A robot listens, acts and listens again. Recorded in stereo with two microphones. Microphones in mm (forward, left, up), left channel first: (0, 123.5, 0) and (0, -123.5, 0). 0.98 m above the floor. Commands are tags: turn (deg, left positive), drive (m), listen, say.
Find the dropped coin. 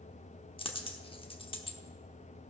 <turn deg="20"/>
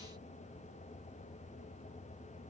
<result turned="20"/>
<listen/>
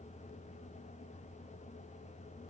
<say>I heard a dropped coin, but can't make it out now. It was about straight ahead or 140° left.</say>